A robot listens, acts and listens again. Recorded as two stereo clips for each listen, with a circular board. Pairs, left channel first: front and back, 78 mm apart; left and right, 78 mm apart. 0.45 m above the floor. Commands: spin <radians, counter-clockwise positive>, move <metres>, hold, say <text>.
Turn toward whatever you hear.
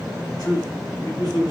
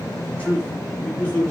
spin 0.35
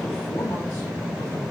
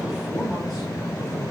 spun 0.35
hold
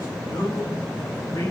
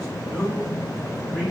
hold
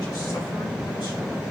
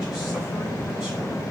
say I heard a man speaking from this way, but can't make it out now.